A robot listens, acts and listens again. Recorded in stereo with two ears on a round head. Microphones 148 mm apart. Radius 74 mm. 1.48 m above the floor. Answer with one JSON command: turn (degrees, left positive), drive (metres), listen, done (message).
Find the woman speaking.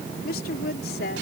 {"turn": 60}
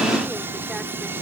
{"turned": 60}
{"listen": true}
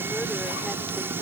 {"listen": true}
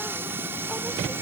{"done": "I heard a woman speaking, but can't make it out now. It was about straight ahead or 60° left."}